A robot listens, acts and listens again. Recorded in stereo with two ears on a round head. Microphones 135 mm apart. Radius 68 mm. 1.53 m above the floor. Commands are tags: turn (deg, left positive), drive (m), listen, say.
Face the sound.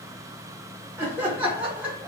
<turn deg="-30"/>
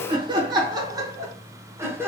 <turn deg="-15"/>
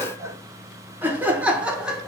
<turn deg="-30"/>
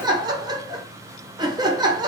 <turn deg="-150"/>
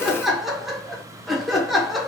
<say>Facing the laughter, 2 to 4 m away.</say>